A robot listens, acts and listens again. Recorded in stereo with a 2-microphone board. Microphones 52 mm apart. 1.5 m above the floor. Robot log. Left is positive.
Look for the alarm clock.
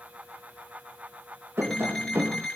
cmd yaw +30
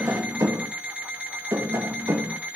note: So it is at 30° right.
cmd yaw -30
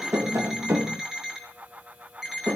note: The alarm clock is now 10° right.
cmd yaw -10
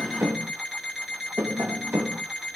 end: Facing the alarm clock.